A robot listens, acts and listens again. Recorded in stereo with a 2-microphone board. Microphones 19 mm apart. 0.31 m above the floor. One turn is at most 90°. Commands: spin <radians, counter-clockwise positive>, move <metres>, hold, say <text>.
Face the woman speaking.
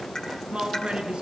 spin -1.22
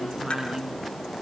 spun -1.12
spin -0.79
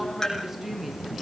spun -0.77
hold
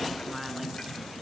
hold
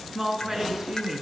spin -0.52
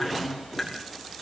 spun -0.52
say Found it: a woman speaking, straight ahead.